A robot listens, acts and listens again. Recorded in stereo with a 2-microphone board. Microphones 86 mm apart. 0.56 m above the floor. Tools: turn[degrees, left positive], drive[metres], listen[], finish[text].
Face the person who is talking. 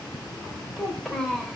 Action: turn[30]
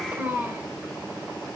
Thought: So it is at 25° right.
Action: turn[-25]
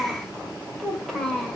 Action: finish[Found it: a child speaking, straight ahead, 2 to 4 m away.]